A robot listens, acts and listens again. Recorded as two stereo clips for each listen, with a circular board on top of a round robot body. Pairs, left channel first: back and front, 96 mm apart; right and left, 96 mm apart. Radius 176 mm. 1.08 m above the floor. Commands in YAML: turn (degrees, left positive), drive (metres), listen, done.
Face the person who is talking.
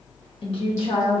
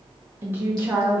turn: 160
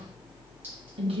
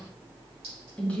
turn: -15
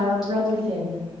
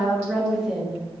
done: "Facing the woman speaking, 1 to 2 m away."